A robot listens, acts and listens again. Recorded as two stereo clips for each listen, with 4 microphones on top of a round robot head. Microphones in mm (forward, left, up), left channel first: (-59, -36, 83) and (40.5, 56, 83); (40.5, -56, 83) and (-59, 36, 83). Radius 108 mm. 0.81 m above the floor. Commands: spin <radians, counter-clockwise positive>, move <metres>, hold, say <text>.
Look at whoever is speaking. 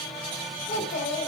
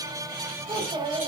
spin -2.79
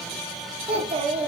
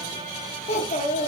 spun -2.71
say Facing the child speaking.